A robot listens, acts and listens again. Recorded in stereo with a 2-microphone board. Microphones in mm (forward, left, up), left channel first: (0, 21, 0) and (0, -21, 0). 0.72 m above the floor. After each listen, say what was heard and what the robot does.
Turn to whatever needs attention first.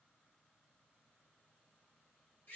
Keep listening.
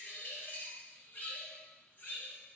Keep listening.
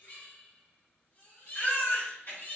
The baby crying: about 60° left or 120° left. Turn 60° left.
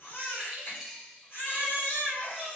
So it is at 55° left. Turn 55° left.
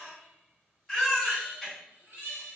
Found it: a baby crying, straight ahead, 1 to 2 m away.